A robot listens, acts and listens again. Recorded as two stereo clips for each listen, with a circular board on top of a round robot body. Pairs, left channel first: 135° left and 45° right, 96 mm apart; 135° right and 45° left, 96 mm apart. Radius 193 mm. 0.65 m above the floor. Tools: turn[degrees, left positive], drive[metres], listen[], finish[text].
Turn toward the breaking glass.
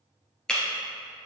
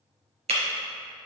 Thought: The breaking glass: 50° left.
Action: turn[50]
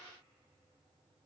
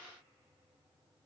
Action: finish[Facing where the breaking glass came from. I can't hear it now.]